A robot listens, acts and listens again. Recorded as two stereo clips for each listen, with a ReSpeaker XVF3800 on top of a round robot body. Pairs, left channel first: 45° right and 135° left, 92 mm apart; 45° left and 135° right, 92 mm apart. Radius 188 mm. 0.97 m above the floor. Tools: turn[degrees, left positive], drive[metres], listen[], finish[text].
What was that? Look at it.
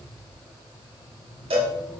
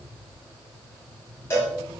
Thought: The cowbell: 110° left.
Action: turn[110]
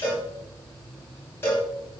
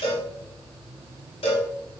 Thought: The cowbell is now 20° left.
Action: turn[20]
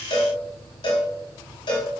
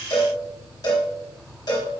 Action: finish[Found it: a cowbell, straight ahead, 1 to 2 m away.]